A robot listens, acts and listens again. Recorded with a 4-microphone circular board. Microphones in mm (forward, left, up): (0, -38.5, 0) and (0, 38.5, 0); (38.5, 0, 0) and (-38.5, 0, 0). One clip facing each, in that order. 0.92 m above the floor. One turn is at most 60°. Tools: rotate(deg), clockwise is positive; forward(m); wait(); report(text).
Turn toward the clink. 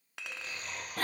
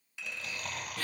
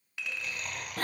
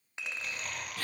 rotate(60)
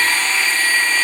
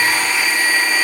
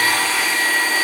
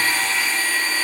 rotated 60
rotate(60)
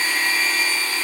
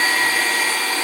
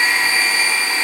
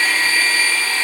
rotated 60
wait()
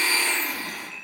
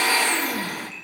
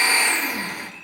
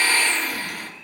report("I heard a clink from this way, but can't make it out now.")